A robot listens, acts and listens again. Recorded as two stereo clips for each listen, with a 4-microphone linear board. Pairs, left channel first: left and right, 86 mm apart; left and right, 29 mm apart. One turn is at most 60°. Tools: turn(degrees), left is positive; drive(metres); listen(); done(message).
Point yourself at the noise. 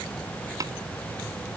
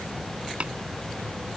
turn(degrees=-45)
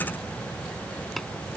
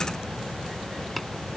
listen()
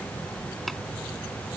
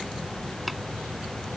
listen()
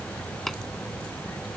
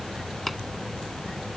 done("Facing the tapping.")